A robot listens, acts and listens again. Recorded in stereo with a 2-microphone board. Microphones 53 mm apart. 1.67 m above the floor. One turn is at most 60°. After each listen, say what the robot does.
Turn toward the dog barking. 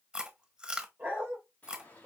Turn 30° right.
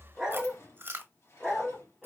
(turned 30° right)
Facing the dog barking, 1 to 2 m away.